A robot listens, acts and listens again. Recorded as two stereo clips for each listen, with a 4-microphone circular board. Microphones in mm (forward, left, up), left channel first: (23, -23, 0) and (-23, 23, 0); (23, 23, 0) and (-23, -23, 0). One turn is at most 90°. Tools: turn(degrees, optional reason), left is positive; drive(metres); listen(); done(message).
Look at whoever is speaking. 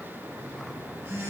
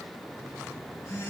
listen()
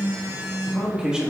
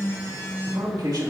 turn(degrees=-90, reason="The man speaking: 150° right.")
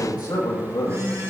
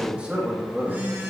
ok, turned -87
turn(degrees=-65, reason="The man speaking is now 65° right.")
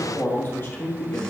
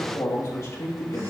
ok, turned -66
done("Found it: a man speaking, straight ahead.")